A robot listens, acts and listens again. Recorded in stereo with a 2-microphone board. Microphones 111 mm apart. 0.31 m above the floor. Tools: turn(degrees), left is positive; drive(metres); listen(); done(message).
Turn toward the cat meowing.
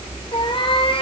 turn(degrees=55)
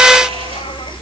listen()
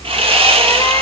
listen()
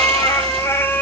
turn(degrees=15)
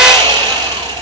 listen()
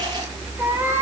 turn(degrees=-20)
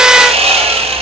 listen()
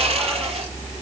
listen()
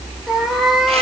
done("Found it: a cat meowing, straight ahead.")